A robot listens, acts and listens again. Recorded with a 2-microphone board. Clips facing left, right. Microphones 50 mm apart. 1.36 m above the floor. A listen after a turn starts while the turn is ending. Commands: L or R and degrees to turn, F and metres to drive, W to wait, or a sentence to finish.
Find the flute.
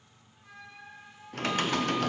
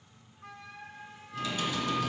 R70
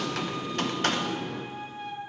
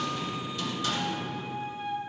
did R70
Facing the flute, 1 to 2 m away.